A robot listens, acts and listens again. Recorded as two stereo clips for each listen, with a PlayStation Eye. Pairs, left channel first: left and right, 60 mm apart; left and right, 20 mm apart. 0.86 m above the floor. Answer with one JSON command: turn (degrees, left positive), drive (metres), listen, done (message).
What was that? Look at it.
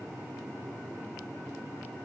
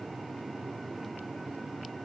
{"listen": true}
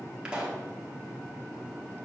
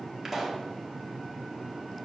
{"turn": -15}
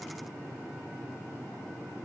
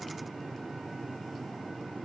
{"listen": true}
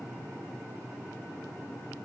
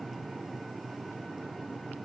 {"done": "I heard a pop, but can't make it out now. It was about straight ahead or 150° right."}